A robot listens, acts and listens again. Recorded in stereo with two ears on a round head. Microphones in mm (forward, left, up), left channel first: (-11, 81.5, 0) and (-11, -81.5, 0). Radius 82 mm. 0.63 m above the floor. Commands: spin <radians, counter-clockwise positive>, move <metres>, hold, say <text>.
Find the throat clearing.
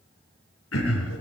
spin 1.57
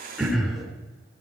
say Facing the throat clearing, 2 to 4 m away.